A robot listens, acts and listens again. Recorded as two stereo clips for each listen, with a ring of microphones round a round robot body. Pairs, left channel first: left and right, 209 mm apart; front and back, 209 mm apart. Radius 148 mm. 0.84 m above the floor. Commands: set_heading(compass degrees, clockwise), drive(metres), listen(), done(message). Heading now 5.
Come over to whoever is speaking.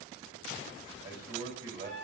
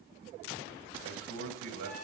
set_heading(155)
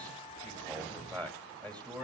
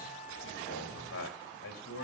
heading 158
drive(1.0)
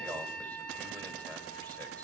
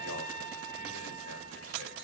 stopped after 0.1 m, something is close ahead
listen()
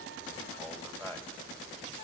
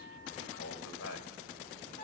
done("Blocked. The man speaking is further on, straight ahead.")